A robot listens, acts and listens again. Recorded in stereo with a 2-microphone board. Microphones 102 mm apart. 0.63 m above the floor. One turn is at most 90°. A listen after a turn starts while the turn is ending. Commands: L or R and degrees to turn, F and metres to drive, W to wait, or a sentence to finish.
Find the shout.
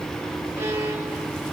W
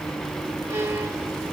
W
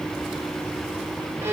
I can't make out a shout, only a violin.